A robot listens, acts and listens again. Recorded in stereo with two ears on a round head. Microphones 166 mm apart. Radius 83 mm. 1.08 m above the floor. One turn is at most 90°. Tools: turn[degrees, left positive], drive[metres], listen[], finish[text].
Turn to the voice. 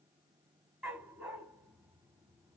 Action: listen[]
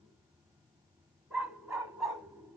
Action: listen[]
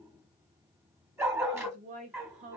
Thought: The woman speaking: about 45° right or 135° right.
Action: turn[-45]
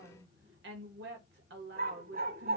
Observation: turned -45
Thought: So it is at 85° right.
Action: turn[-85]
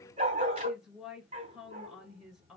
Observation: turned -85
Action: finish[Facing the woman speaking.]